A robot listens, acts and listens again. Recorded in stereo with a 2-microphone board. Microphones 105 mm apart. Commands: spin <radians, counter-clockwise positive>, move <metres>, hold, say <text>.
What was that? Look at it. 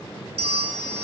spin -1.13
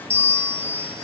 spin -0.44
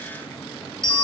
say Facing the bell.